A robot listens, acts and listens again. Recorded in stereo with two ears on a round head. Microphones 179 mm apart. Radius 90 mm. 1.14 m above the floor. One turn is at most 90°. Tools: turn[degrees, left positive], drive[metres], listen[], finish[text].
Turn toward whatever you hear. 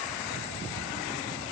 Action: listen[]
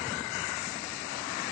Action: listen[]
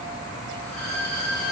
Action: turn[30]
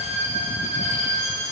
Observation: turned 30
Thought: So it is at 145° left.
Action: turn[90]
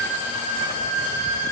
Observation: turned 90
Thought: The violin is now 90° left.
Action: turn[90]
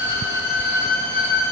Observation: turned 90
Thought: The violin is now 10° left.
Action: turn[10]
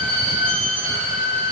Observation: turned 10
Action: finish[Facing the violin, 1 to 2 m away.]